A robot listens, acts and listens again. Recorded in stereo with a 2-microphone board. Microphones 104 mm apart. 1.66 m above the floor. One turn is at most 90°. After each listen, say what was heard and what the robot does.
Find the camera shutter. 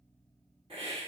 Keep listening.
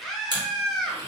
The camera shutter: about 40° right or 140° right. Turn 40° right.
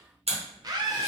So it is at 100° right. Turn 90° right.
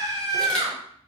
Nothing new. It was at 10° right. Turn 10° right.
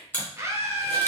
The camera shutter is now 20° left. Turn 20° left.
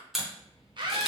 Facing the camera shutter.